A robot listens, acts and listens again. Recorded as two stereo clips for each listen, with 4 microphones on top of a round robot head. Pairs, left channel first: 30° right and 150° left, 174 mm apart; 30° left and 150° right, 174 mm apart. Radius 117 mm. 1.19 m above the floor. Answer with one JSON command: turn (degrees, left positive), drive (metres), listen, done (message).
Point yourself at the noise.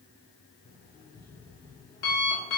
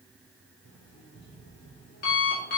{"done": "Facing the alarm clock."}